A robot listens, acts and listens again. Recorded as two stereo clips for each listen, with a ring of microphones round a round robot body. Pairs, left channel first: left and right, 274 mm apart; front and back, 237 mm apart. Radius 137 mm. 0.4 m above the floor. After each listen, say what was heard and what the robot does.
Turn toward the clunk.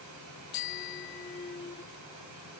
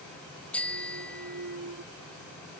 The clunk: 160° left. Turn 160° left.
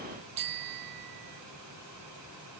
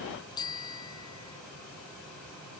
I heard a clunk from this way, but can't make it out now.